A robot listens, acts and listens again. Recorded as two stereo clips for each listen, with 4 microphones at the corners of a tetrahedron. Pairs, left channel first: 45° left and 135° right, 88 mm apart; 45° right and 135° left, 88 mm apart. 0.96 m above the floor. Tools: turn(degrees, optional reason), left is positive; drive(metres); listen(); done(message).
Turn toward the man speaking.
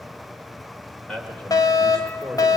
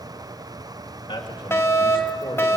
turn(degrees=-35, reason="The man speaking: 35° right.")
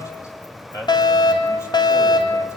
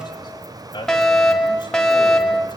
turn(degrees=-10, reason="The man speaking is now 10° right.")
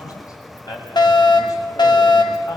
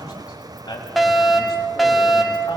done("Found it: a man speaking, straight ahead, over 4 m away.")